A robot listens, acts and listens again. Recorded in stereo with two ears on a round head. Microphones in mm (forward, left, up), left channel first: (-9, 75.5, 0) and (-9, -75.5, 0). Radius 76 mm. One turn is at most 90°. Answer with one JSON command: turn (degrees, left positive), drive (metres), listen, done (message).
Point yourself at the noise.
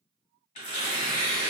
{"turn": 45}
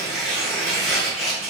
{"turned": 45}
{"done": "Found it: tearing paper, straight ahead."}